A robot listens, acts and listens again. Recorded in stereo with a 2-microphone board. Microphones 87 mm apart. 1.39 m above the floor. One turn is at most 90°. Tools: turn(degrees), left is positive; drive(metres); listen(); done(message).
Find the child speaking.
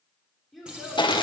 turn(degrees=30)
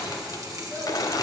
listen()
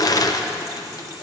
listen()
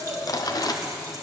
turn(degrees=90)
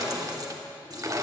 turn(degrees=50)
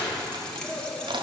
turn(degrees=-15)
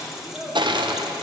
done("Found it: a child speaking, straight ahead.")